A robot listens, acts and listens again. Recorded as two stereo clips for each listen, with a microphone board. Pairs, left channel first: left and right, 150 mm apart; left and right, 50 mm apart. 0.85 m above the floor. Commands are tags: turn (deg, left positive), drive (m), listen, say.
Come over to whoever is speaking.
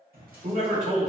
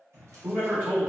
<turn deg="-40"/>
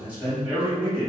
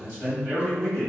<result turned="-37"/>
<turn deg="-10"/>
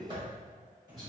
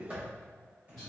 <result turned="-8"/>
<drive m="1.0"/>
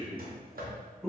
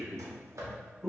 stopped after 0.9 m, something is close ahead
<say>Arrived at the man speaking, straight ahead.</say>